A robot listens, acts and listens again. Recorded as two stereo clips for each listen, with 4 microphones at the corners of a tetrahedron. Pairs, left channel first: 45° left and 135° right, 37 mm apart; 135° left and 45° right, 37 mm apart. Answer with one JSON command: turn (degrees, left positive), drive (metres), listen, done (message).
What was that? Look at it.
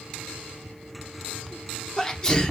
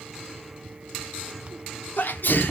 {"turn": 115}
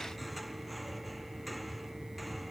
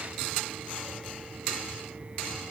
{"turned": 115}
{"done": "I heard a sneeze from this way, but can't make it out now."}